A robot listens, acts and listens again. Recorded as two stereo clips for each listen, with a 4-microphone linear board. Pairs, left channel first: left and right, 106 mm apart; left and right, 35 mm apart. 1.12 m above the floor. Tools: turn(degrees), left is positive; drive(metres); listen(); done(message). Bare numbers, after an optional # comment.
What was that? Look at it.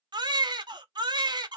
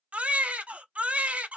# The baby crying: about 45° right or 135° right.
turn(-45)
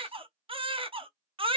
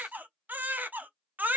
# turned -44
# So it is at 80° right.
turn(-80)
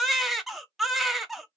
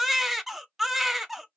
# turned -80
done("Facing the baby crying, under 1 m away.")